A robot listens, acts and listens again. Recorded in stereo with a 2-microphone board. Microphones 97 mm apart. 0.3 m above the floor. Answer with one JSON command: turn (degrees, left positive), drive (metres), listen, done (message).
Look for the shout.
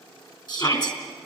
{"turn": 40}
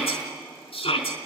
{"turn": 95}
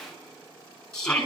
{"turn": 10}
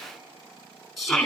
{"done": "Facing the shout."}